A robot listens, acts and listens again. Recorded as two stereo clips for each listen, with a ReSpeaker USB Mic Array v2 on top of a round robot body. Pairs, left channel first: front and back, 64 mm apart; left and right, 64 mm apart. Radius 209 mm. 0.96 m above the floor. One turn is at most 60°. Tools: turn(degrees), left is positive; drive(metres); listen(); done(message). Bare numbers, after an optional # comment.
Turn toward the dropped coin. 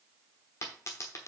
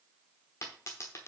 # The dropped coin: 45° left.
turn(45)
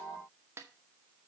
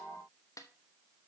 done("Facing where the dropped coin came from. I can't hear it now.")